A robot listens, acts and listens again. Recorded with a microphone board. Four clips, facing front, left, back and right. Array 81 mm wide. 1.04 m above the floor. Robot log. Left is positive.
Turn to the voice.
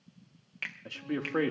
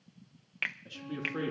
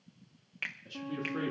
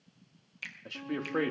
note: The man speaking: 35° right.
cmd yaw -35
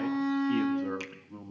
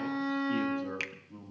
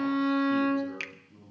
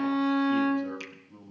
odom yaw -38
end: Facing the man speaking, 1 to 2 m away.